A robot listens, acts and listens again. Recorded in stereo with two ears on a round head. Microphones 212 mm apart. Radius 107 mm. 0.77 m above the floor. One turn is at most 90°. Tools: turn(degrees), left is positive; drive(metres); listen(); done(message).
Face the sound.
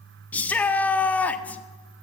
turn(degrees=30)
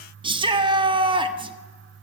turn(degrees=-25)
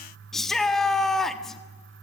done("Found it: a shout, straight ahead.")